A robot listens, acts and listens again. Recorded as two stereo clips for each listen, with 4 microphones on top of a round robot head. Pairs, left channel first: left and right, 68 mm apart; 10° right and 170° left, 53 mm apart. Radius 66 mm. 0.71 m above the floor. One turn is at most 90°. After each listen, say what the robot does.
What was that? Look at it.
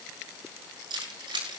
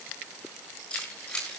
Turn 80° right.
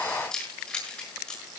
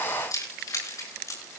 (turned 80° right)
Turn 10° left.
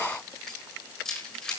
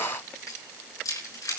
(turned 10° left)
Turn 10° left.
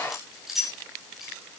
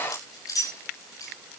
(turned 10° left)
Facing the keys jangling, over 4 m away.